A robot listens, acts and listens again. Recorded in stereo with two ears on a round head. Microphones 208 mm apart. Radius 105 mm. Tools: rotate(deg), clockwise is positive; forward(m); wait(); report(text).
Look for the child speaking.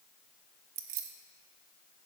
wait()
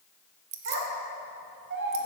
rotate(60)
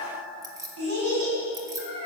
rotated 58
rotate(60)
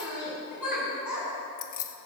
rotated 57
report("Found it: a child speaking, straight ahead.")